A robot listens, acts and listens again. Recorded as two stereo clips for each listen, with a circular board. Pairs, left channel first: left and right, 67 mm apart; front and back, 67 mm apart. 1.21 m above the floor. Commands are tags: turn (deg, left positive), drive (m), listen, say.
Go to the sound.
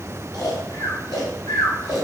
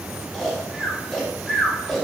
<turn deg="85"/>
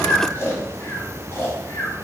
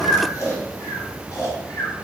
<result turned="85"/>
<turn deg="35"/>
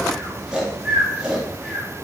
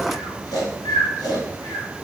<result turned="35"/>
<turn deg="-10"/>
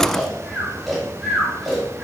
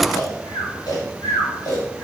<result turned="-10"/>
<drive m="1.0"/>
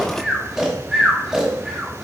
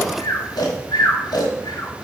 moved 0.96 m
<turn deg="-10"/>
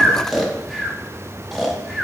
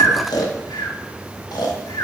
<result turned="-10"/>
<drive m="1.0"/>
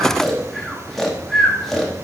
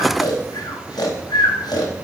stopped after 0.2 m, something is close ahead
<say>Arrived at the snoring, straight ahead.</say>